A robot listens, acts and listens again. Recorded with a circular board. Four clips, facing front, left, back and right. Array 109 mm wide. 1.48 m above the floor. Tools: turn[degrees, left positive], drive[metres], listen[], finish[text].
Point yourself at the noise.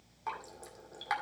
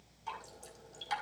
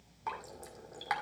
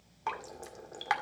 Thought: The dripping: 95° right.
Action: turn[-95]
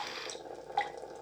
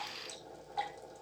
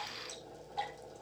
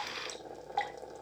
Thought: The dripping is now 35° right.
Action: turn[-35]
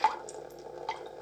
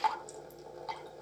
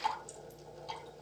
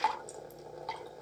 Action: finish[Facing the dripping.]